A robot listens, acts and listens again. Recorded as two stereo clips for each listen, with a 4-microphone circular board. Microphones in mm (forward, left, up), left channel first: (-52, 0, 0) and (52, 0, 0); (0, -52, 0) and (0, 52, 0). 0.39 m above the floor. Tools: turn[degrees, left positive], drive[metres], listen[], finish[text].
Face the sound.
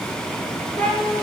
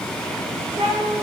Thought: The cat meowing: 100° left.
Action: turn[100]
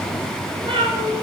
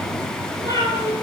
Thought: The cat meowing is now 35° right.
Action: turn[-35]
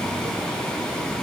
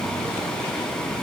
Action: listen[]
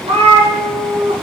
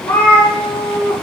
Thought: The cat meowing is now 20° right.
Action: turn[-20]
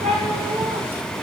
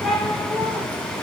Action: finish[Found it: a cat meowing, straight ahead, 2 to 4 m away.]